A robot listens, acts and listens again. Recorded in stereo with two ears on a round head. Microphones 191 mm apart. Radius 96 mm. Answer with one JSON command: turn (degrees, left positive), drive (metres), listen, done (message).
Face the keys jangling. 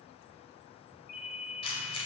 {"turn": 25}
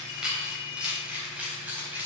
{"turn": -10}
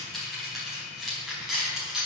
{"done": "Facing the keys jangling, over 4 m away."}